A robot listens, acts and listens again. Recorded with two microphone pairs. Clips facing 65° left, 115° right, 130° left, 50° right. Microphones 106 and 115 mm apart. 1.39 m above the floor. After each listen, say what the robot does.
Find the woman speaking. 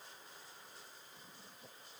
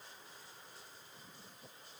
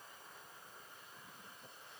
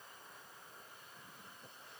Keep listening.
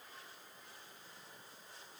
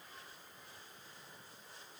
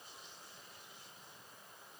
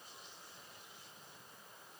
Keep listening.
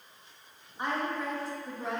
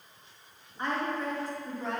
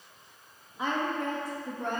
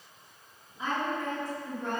Turn 150° left.
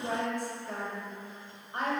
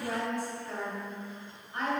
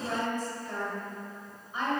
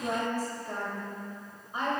Facing the woman speaking.